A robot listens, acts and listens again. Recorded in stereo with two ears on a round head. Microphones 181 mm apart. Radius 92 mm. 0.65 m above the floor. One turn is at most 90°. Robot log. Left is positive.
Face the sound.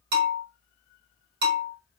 note: The bell: about 50° right or 130° right.
cmd yaw -50
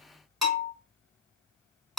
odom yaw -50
end: Found it: a bell, straight ahead.